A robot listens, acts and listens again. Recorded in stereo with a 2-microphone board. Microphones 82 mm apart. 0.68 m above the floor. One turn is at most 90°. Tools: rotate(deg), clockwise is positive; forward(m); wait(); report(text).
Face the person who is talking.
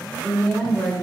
rotate(-20)
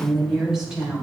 rotate(10)
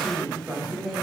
report("Found it: a woman speaking, straight ahead.")